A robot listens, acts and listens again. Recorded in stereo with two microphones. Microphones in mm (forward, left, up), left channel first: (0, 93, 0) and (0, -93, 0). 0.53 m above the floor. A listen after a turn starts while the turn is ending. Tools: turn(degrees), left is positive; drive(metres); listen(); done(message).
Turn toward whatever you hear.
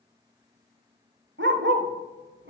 turn(degrees=-90)
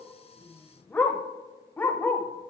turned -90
turn(degrees=10)
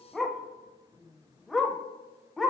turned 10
done("Found it: a dog barking, straight ahead.")